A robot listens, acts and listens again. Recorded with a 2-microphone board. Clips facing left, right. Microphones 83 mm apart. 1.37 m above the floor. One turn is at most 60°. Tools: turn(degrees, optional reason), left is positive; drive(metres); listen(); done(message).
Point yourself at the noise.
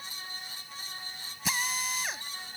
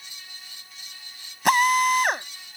turn(degrees=-60, reason="The drill: about 60° right or 120° right.")
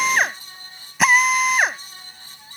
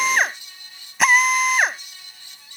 done("Facing the drill.")